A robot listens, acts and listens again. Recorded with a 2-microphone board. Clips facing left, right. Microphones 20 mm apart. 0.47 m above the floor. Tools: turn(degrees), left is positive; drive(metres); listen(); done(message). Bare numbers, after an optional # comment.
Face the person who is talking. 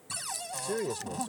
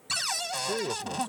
turn(-30)
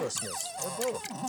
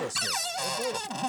turn(30)
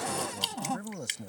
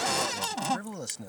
# So it is at 30° right.
turn(-30)
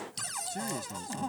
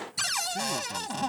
listen()
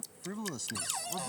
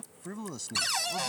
done("Facing the man speaking.")